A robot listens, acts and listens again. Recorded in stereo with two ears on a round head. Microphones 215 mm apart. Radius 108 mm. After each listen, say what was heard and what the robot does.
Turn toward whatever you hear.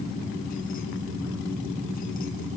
Keep listening.
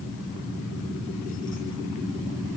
Keep listening.
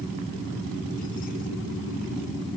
I can't make out anything.